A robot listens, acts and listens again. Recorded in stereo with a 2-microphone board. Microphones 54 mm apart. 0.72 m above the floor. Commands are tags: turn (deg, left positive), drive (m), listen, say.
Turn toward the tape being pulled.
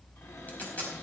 <turn deg="35"/>
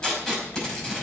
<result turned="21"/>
<turn deg="15"/>
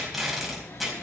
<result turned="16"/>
<say>Found it: tape being pulled, straight ahead, over 4 m away.</say>